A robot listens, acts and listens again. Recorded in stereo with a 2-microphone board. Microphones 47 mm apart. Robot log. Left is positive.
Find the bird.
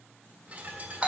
note: The bird: about 30° right or 150° right.
cmd yaw -30
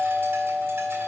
cmd idle
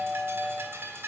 note: So it is at 120° right.
cmd yaw -120
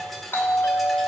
end: Found it: a bird, straight ahead.